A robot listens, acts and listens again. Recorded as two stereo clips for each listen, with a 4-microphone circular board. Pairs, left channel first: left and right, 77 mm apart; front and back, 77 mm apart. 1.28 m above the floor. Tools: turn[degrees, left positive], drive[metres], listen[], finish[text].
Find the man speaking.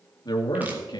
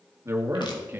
Thought: The man speaking: 115° left.
Action: turn[115]
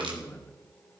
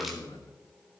Thought: The man speaking is now 20° left.
Action: turn[20]
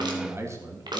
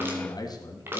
Thought: The man speaking is now 45° right.
Action: turn[-45]
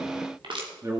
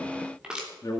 Thought: The man speaking is now 45° right.
Action: turn[-45]
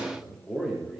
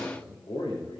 Action: finish[Facing the man speaking, 2 to 4 m away.]